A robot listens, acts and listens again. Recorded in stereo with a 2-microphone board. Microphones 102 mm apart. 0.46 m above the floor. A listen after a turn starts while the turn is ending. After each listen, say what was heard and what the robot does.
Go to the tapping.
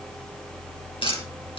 The tapping: about 60° left or 120° left. Turn 60° left.
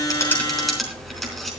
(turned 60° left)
Drive 1.0 m forward.
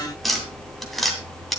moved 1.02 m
Drive 1.0 m forward.
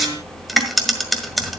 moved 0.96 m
Drive 1.0 m forward.
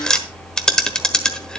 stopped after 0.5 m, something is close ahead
The tapping is now 10° left. Turn 10° left.
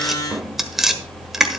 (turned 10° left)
Arrived at the tapping, straight ahead.